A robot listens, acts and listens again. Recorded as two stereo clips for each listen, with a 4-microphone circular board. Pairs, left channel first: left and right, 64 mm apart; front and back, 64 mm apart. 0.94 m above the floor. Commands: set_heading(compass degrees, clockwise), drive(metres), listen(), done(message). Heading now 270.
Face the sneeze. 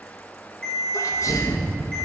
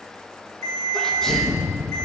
set_heading(190)
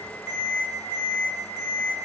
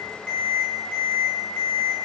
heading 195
done("I heard a sneeze from this way, but can't make it out now.")